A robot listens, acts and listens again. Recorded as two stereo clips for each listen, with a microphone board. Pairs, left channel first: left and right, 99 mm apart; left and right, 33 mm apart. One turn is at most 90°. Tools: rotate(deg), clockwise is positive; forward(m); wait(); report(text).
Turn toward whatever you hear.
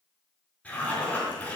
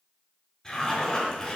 rotate(-30)
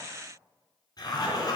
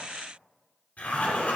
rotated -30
rotate(-90)
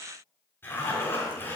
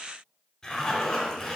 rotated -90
rotate(-25)
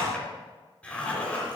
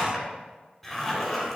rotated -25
rotate(-15)
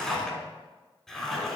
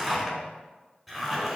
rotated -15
report("Found it: a zipper, straight ahead.")